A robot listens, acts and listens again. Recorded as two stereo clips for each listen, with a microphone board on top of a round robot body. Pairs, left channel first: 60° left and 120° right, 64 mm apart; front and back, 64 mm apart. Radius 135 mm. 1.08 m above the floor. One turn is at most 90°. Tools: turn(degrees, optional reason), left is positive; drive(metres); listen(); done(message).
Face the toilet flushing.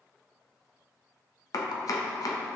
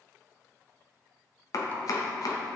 listen()
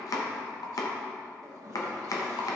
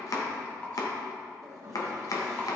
turn(degrees=-90, reason="The toilet flushing: 145° right.")
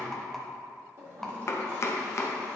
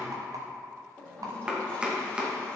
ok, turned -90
turn(degrees=-70, reason="The toilet flushing is now 70° right.")
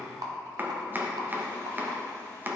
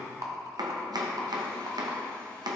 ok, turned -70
listen()
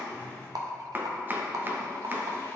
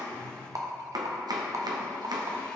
done("Found it: a toilet flushing, straight ahead.")